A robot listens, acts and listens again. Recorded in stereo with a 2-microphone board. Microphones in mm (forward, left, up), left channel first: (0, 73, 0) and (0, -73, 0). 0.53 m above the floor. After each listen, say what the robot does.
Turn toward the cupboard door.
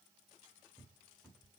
Turn 30° left.
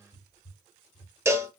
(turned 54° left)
Turn 120° left.
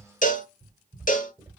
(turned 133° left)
Turn 15° right.
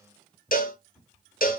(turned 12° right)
Found it: a cupboard door, straight ahead.